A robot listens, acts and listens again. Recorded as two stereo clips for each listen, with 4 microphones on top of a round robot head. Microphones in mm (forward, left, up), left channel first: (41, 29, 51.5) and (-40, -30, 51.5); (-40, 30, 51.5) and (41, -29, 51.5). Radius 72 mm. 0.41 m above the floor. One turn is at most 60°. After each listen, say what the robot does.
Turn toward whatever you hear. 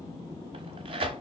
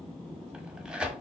Turn 60° right.
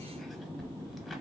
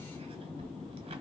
Turn 60° right.
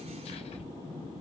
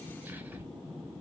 Keep listening.
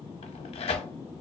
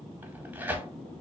Turn 35° left.
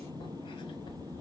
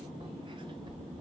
Keep listening.
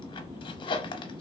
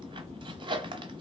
Found it: tearing paper, straight ahead, under 1 m away.